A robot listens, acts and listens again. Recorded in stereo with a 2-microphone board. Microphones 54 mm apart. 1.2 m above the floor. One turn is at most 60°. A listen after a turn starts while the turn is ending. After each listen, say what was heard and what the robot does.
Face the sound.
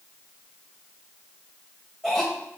Turn 30° left.
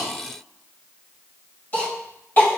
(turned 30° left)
So it is at 140° left. Turn 60° left.
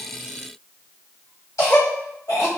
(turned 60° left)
The cough is now 85° left. Turn 60° left.
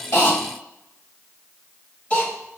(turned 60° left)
The cough is now 25° left. Turn 25° left.
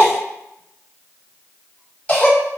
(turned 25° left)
The cough is now 25° left. Turn 25° left.
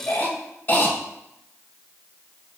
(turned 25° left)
The cough is now 35° left. Turn 35° left.
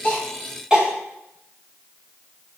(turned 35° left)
The cough is now 20° right. Turn 20° right.
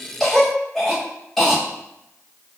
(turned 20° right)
Facing the cough, 2 to 4 m away.